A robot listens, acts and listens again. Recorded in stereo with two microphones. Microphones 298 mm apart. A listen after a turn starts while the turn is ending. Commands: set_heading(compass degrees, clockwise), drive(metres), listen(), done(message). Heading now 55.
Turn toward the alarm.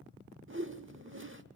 listen()
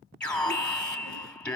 set_heading(25)
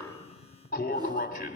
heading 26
set_heading(241)
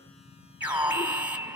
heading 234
done("Facing the alarm, 2 to 4 m away.")